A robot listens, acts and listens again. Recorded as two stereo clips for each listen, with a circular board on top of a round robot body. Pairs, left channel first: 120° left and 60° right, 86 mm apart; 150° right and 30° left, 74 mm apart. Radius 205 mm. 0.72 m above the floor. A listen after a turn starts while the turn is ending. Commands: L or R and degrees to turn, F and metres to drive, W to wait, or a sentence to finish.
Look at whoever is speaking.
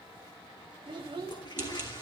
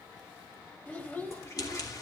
R85
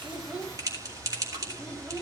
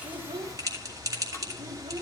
W
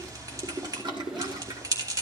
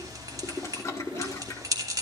W
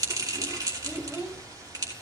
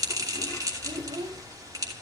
L20
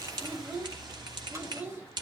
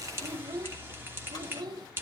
Found it: a child speaking, straight ahead, 2 to 4 m away.